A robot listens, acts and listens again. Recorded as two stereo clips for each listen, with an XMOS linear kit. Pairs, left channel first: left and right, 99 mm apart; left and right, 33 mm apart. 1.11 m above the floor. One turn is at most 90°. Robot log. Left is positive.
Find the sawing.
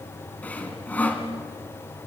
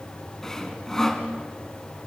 cmd yaw +30
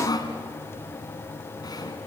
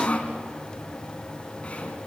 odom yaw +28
note: So it is at 135° left.
cmd yaw +90
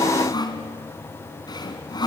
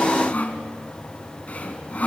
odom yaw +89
note: The sawing is now 45° left.
cmd yaw +45
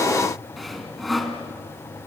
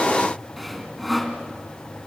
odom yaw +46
end: Found it: sawing, straight ahead, 2 to 4 m away.